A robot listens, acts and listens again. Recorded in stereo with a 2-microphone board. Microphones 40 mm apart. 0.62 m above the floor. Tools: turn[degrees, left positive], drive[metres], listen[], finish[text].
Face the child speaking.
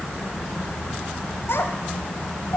Action: turn[90]
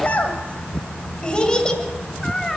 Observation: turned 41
Thought: So it is at 10° left.
Action: turn[10]
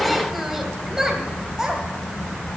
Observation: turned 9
Thought: The child speaking is now 20° right.
Action: turn[-20]
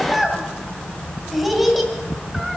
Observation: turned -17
Action: finish[Facing the child speaking.]